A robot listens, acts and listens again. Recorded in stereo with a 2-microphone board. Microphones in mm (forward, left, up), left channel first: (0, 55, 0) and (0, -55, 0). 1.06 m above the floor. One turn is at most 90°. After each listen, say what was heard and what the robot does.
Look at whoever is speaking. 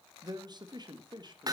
The man speaking: about 40° right or 140° right. Turn 40° right.
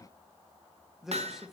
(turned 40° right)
Facing the man speaking, 1 to 2 m away.